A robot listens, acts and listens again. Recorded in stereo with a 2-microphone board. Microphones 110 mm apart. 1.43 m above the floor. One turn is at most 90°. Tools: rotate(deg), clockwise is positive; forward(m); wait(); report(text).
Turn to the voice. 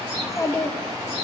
rotate(-30)
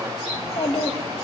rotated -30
rotate(-90)
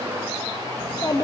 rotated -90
rotate(-35)
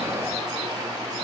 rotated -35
wait()
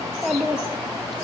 report("Facing the child speaking.")